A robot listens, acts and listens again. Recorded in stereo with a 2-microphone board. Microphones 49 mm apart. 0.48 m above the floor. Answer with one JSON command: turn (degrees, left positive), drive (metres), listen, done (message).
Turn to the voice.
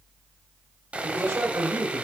{"turn": -65}
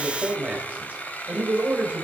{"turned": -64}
{"turn": -30}
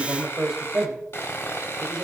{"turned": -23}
{"turn": -10}
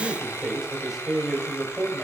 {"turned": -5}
{"done": "Facing the man speaking, 2 to 4 m away."}